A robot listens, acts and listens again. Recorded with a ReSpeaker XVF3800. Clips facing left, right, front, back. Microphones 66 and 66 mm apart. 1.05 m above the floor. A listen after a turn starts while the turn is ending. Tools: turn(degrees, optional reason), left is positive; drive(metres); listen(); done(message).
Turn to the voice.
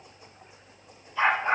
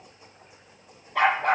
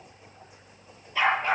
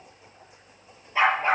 listen()
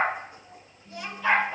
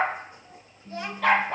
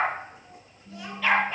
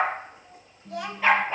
turn(degrees=-150, reason="The child speaking: 150° right.")
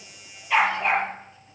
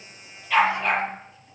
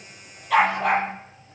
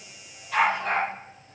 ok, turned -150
listen()
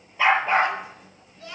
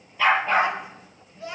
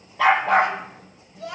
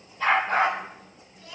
turn(degrees=-20, reason="The child speaking is now 20° right.")
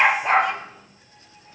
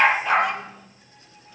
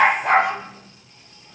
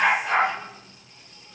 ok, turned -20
listen()
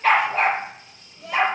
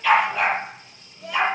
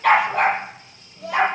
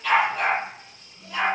done("Facing the child speaking, over 4 m away.")